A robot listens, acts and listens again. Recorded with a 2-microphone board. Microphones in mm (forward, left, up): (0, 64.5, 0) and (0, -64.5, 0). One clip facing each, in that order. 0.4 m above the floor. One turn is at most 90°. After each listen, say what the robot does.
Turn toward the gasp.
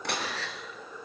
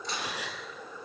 Turn 30° right.
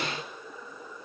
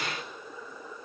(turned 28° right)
Keep listening.
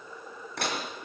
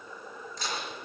I heard a gasp, but can't make it out now. It was about 15° left or 140° right.